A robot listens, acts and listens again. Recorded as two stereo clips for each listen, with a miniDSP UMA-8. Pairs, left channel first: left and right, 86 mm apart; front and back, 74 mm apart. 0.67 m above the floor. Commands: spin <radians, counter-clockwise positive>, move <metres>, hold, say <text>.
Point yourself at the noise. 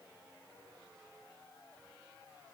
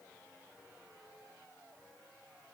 hold
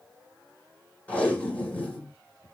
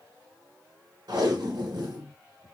spin 2.88
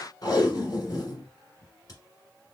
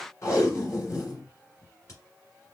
spin 0.79
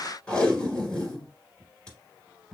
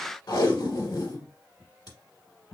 spin 0.17
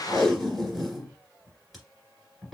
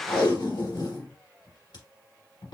say Facing the tape being pulled.